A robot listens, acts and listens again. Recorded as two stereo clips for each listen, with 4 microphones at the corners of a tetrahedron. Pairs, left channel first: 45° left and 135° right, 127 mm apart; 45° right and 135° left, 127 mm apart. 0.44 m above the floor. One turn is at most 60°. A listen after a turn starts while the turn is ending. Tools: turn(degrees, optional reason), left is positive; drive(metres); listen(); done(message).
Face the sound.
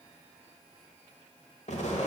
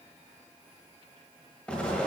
turn(degrees=35, reason="The explosion: 35° left.")
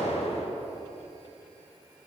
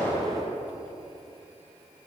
done("Found it: an explosion, straight ahead, 1 to 2 m away.")